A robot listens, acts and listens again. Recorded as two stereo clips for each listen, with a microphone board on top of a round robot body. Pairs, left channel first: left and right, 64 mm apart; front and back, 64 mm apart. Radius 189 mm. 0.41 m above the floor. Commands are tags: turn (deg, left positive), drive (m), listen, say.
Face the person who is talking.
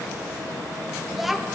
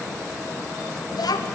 <say>Facing the child speaking, under 1 m away.</say>